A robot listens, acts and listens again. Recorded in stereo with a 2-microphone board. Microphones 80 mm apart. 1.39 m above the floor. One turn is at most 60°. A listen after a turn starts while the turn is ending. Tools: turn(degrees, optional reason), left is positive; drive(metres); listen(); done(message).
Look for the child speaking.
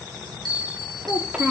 turn(degrees=-30)
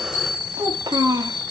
turn(degrees=-60, reason="So it is at 130° right.")
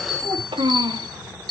turn(degrees=-60, reason="The child speaking is now 80° right.")
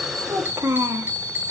turn(degrees=-35, reason="The child speaking is now 35° right.")
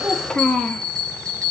turn(degrees=10, reason="The child speaking is now 10° left.")
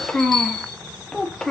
turn(degrees=10, reason="The child speaking is now 10° left.")
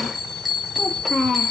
done("Found it: a child speaking, straight ahead, 2 to 4 m away.")